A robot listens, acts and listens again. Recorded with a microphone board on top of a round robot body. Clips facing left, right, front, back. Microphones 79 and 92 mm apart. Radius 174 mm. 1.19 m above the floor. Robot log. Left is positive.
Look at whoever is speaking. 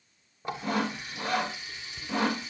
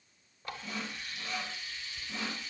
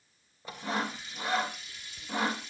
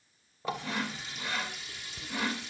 cmd idle
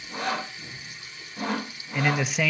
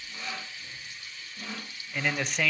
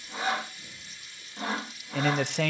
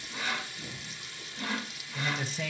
end: Found it: a man speaking, straight ahead, under 1 m away.